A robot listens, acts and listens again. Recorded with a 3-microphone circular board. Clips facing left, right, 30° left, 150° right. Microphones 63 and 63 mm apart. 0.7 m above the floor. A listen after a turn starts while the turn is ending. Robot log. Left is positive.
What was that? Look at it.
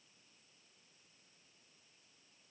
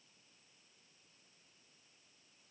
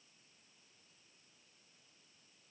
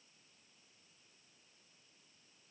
cmd idle
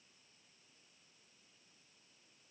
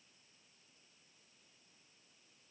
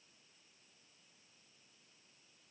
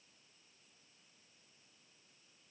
cmd idle
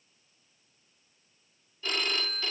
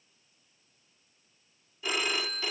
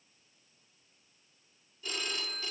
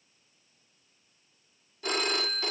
note: The phone ringing: 170° right.
cmd yaw -170
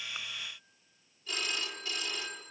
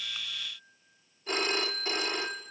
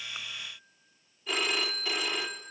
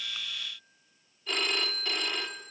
note: The phone ringing is now 55° right.
cmd yaw -55
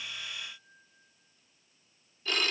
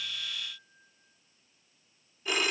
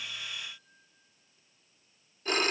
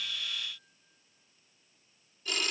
note: The phone ringing is now 15° right.
cmd yaw -15
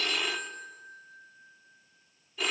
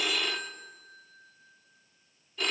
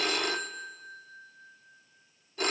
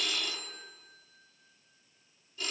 end: Facing the phone ringing.